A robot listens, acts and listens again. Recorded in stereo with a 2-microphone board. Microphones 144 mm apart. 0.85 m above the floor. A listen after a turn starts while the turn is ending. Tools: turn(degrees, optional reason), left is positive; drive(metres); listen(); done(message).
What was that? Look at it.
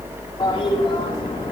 turn(degrees=35, reason="The toilet flushing: about 35° left or 145° left.")
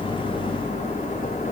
listen()
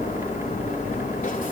turn(degrees=110, reason="So it is at 110° left.")
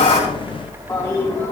turn(degrees=25, reason="The toilet flushing is now 25° left.")
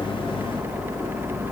listen()
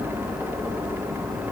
listen()
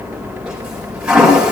done("Found it: a toilet flushing, straight ahead.")